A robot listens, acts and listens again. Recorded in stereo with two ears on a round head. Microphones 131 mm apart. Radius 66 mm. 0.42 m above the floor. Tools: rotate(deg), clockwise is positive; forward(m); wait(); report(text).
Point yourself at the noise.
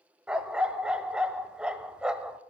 rotate(30)
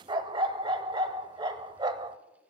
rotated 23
rotate(150)
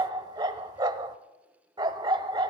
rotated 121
rotate(30)
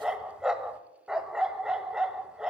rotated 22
report("Found it: a dog barking, straight ahead, under 1 m away.")